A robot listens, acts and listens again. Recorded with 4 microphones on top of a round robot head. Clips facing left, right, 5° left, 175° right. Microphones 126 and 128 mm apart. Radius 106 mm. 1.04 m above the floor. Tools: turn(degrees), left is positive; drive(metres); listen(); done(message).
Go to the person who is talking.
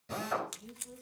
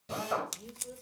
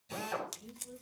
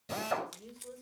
turn(degrees=-130)
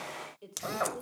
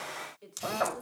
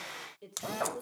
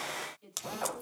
turn(degrees=15)
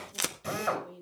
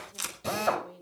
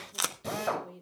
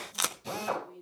drive(metres=1.0)
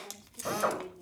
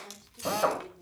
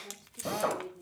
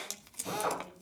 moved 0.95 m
turn(degrees=15)
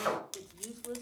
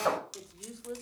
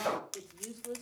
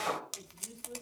drive(metres=1.0)
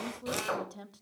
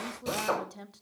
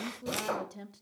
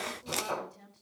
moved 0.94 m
drive(metres=1.0)
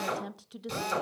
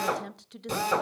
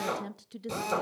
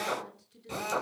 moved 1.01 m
drive(metres=1.0)
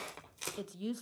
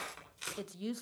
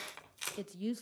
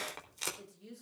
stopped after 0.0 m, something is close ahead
done("I am next to the woman speaking.")